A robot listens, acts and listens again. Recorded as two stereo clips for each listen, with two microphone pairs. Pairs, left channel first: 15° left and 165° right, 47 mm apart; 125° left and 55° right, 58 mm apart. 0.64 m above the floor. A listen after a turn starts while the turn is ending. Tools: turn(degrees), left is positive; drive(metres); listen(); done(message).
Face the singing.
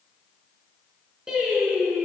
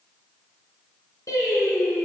turn(degrees=120)
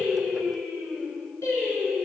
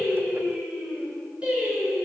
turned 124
turn(degrees=15)
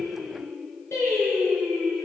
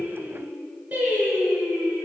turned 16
done("Facing the singing.")